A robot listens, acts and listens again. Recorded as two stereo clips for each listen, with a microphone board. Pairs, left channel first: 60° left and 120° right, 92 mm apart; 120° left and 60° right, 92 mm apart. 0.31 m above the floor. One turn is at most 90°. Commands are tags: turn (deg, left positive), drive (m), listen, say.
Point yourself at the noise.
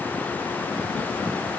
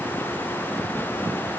<listen/>
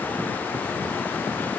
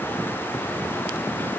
<listen/>
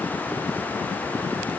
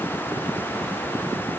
<say>I can't make out anything.</say>